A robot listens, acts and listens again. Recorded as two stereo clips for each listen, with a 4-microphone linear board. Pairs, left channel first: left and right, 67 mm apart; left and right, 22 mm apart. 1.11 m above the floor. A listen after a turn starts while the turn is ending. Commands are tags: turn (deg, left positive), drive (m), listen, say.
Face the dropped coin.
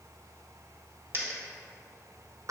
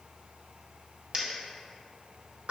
<turn deg="-40"/>
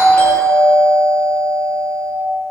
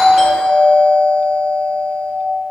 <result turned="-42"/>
<listen/>
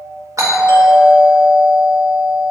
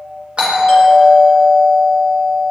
<say>I heard a dropped coin, but can't make it out now. It was about straight ahead or 95° right.</say>